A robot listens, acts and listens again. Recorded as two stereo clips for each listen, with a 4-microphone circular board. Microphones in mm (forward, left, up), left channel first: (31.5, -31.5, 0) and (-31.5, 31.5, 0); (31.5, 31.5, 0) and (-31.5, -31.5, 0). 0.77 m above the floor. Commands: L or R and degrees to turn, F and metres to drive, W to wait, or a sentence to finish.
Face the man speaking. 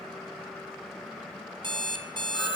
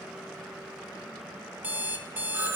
W
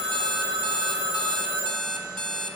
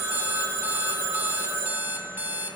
W
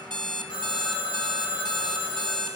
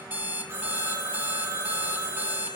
I can't make out a man speaking, only an alarm clock and a phone ringing.